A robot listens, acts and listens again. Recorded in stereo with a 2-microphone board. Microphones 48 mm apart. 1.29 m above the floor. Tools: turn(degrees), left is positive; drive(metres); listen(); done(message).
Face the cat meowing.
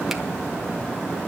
listen()
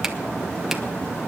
listen()
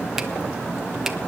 done("I can't make out a cat meowing.")